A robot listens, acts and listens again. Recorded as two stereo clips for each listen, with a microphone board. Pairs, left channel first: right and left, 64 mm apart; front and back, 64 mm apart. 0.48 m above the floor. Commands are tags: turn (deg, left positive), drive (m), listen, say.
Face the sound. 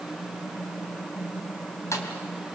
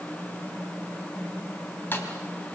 <turn deg="-55"/>
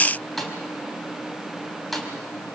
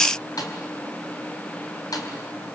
<say>Facing the snare drum, 2 to 4 m away.</say>